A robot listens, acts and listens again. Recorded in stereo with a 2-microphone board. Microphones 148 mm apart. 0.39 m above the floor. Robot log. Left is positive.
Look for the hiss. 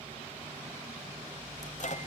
cmd idle
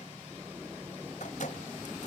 cmd idle
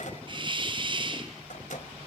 note: The hiss: about 35° right or 145° right.
cmd yaw -35
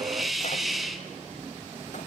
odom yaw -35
end: Facing the hiss.